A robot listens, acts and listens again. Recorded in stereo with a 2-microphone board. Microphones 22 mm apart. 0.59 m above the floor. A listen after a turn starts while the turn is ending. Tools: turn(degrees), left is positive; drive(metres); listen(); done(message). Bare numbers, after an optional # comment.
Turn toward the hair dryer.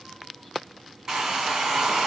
# The hair dryer: about 20° right or 160° right.
turn(-20)
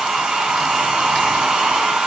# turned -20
# So it is at 140° right.
turn(-140)
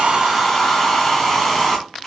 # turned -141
done("Facing the hair dryer, 1 to 2 m away.")